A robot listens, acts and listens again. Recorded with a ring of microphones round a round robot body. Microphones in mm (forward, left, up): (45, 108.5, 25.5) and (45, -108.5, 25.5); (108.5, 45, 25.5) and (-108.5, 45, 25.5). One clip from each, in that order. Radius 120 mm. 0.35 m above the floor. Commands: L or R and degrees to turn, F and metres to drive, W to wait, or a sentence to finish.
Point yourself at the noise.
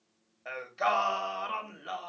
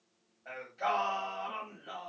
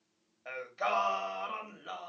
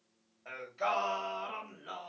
L65
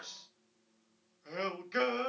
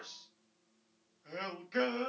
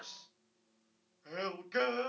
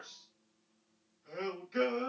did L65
L20
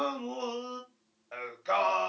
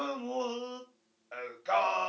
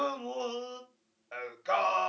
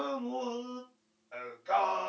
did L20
Found it: singing, straight ahead.